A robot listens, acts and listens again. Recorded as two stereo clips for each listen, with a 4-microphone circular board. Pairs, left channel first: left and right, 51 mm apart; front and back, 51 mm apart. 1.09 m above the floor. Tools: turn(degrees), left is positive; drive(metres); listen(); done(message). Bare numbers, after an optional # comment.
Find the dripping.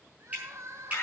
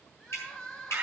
# The dripping: 30° right.
turn(-30)
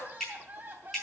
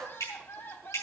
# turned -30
done("Found it: dripping, straight ahead.")